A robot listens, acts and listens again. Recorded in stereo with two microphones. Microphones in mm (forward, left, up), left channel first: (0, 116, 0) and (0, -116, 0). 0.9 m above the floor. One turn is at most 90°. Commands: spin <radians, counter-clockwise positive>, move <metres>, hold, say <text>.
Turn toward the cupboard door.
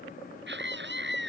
hold
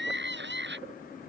hold
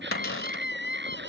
spin 1.22
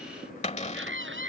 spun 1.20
spin 0.52
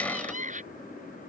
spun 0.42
hold
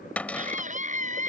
say Found it: a cupboard door, straight ahead.